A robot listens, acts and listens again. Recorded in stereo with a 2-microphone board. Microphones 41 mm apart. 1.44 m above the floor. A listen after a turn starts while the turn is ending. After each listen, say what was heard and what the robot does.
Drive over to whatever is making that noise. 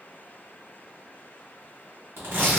Turn 90° right.
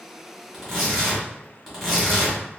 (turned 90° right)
Drive 1.0 m forward.
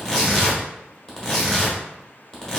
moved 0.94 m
The tearing paper is now 20° left. Turn 20° left.
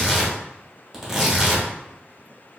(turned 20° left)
Drive 1.0 m forward.
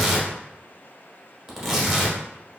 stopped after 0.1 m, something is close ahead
I am next to the tearing paper.